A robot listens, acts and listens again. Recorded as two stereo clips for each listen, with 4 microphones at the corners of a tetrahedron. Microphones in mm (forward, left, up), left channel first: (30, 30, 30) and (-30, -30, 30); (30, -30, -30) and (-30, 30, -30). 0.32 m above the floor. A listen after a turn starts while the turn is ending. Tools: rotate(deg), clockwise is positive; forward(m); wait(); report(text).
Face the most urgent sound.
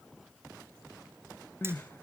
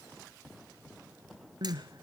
rotate(-105)
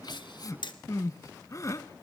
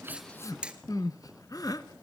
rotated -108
report("Facing the crying, under 1 m away.")